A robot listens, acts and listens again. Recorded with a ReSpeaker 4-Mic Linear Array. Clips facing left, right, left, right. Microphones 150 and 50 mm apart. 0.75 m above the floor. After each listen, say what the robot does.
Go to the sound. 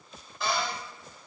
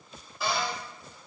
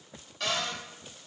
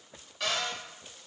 Turn 30° left.
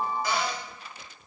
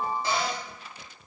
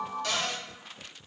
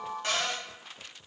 Turn 30° right.
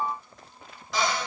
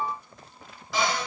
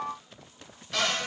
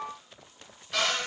Drive 1.0 m forward.
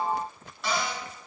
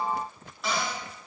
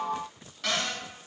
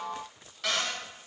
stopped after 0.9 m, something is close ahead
I am next to the cupboard door.